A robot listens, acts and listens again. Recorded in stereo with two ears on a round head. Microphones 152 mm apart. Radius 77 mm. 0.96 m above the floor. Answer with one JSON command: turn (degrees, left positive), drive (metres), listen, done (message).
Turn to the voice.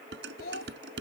{"turn": 60}
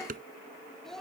{"done": "Found it: a child speaking, straight ahead."}